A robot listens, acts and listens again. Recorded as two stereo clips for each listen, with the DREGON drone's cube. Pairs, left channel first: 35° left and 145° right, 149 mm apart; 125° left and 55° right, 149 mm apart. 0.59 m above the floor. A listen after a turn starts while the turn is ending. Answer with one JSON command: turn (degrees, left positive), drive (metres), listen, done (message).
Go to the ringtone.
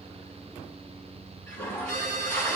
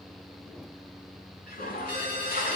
{"turn": 70}
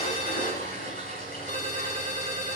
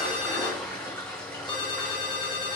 {"drive": 1.0}
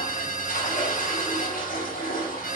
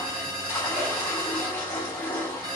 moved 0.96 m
{"drive": 1.0}
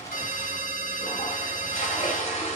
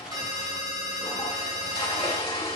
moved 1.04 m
{"turn": 10}
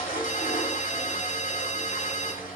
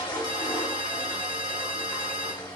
{"drive": 1.0}
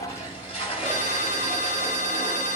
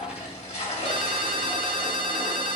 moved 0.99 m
{"drive": 1.0}
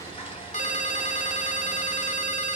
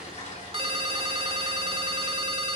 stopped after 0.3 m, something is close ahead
{"done": "I am next to the ringtone."}